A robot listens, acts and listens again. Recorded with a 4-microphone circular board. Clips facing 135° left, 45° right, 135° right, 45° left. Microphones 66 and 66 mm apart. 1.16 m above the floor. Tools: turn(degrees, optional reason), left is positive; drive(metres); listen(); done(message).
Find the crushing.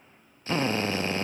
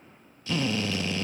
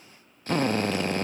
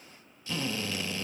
listen()
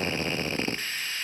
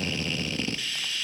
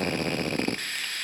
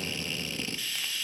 listen()
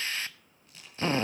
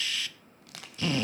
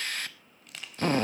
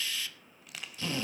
turn(degrees=-45, reason="The crushing: 45° right.")
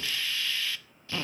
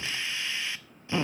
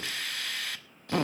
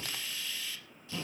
listen()
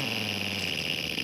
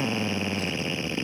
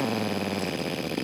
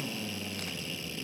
listen()
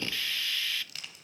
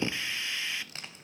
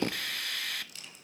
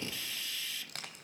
turn(degrees=15, reason="The crushing is now 15° left.")
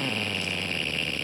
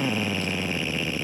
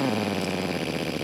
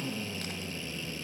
listen()
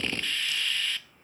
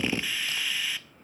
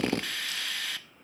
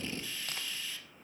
listen()
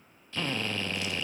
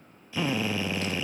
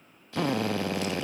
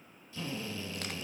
done("Facing where the crushing came from. I can't hear it now.")